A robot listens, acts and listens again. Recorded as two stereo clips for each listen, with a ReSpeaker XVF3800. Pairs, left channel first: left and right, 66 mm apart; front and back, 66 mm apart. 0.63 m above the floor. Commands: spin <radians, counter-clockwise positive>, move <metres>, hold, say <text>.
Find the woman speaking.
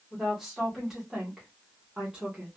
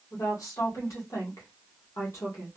spin -0.35
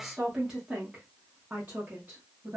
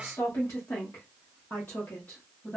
spin -0.96
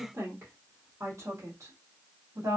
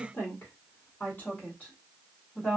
spin -0.96
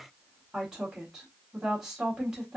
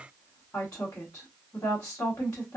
spin -0.17
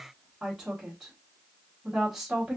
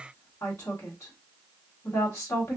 say Found it: a woman speaking, straight ahead.